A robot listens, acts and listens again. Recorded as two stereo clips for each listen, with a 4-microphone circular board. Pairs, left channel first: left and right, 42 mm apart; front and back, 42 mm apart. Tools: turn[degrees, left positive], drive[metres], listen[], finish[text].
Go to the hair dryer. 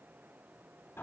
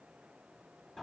Action: listen[]
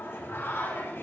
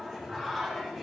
Action: listen[]
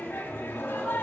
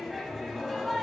Action: finish[I can't make out a hair dryer to turn to.]